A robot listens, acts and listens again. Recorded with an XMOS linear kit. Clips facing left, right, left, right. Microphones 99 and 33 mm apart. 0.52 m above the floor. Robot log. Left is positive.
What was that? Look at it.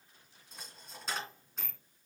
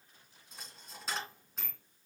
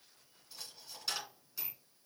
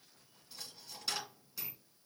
cmd yaw +30
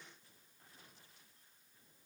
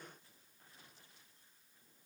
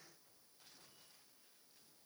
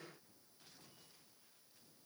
cmd idle
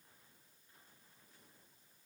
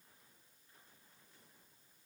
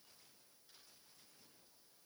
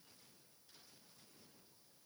end: I heard a dropped coin, but can't make it out now. It was about 30° right or 150° left.